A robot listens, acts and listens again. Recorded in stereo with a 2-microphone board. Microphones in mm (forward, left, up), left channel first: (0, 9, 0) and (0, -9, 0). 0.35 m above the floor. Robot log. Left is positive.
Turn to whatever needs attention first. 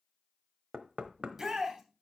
note: The shout: about 20° right or 160° right.
cmd yaw -20
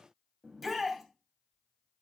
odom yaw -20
end: Found it: a shout, straight ahead, 2 to 4 m away.